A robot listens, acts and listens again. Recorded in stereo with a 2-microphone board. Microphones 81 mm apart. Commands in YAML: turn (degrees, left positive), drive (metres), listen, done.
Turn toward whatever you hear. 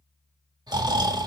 turn: -60
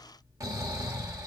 turn: -50
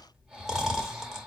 done: "Facing the snoring, 1 to 2 m away."